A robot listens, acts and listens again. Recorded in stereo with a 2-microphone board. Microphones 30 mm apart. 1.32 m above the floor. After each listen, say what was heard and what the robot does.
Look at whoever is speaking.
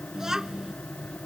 The child speaking: about 20° right or 160° right. Turn 20° right.
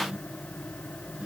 Keep listening.
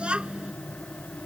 So it is at 145° right. Turn 145° right.
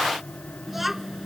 Found it: a child speaking, straight ahead.